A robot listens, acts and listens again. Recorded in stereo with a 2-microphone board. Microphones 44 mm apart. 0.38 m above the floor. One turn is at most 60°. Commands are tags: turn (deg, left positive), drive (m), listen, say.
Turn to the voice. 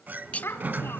<turn deg="60"/>
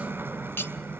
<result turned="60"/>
<listen/>
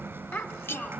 <turn deg="55"/>
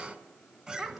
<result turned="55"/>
<say>Found it: a child speaking, straight ahead.</say>